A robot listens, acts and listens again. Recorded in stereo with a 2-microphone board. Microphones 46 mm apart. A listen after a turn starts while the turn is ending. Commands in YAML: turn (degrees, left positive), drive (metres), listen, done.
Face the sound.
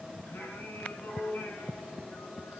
turn: 55
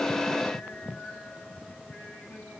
listen: true
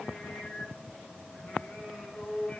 turn: 25
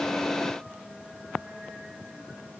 listen: true
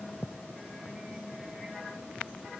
listen: true
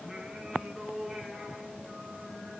done: "Found it: singing, straight ahead."